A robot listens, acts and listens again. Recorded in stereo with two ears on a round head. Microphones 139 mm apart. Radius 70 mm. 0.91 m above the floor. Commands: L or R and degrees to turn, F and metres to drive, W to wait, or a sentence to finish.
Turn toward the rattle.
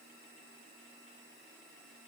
W
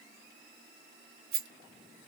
R65
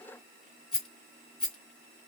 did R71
Facing the rattle.